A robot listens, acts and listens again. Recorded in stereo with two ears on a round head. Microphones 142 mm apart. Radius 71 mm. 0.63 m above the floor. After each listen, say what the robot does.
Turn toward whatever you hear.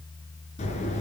Turn 40° left.
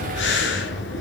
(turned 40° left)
Turn 100° left.
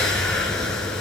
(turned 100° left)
Facing the breathing.